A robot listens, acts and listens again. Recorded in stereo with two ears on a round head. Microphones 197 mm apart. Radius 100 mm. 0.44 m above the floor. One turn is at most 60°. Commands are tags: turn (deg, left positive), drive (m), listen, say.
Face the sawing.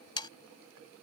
<turn deg="20"/>
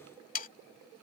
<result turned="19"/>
<turn deg="60"/>
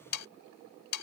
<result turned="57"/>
<turn deg="60"/>
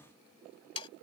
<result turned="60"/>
<turn deg="25"/>
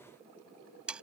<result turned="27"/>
<say>Found it: sawing, straight ahead.</say>